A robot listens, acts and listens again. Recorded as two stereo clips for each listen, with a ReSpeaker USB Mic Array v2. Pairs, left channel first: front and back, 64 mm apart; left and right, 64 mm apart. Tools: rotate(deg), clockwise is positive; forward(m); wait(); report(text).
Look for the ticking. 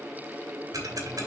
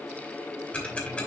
rotate(-160)
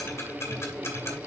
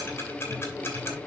rotate(-40)
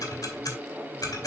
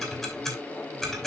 report("Found it: ticking, straight ahead.")